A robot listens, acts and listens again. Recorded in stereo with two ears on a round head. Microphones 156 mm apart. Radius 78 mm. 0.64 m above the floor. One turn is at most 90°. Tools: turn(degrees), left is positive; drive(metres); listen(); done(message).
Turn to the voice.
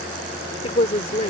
turn(degrees=35)
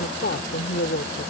turn(degrees=90)
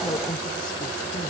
turn(degrees=20)
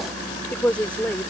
turn(degrees=10)
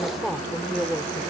done("Found it: a woman speaking, straight ahead.")